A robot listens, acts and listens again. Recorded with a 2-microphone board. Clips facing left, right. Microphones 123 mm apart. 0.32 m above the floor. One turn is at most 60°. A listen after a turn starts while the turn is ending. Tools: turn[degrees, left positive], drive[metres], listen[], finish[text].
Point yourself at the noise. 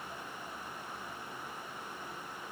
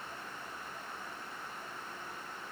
Action: listen[]
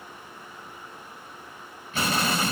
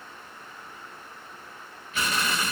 Thought: The explosion: about 35° left or 145° left.
Action: turn[35]
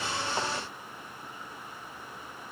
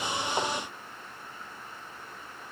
Action: listen[]
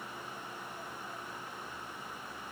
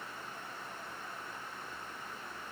Action: finish[I heard an explosion, but can't make it out now. It was about straight ahead or 110° left.]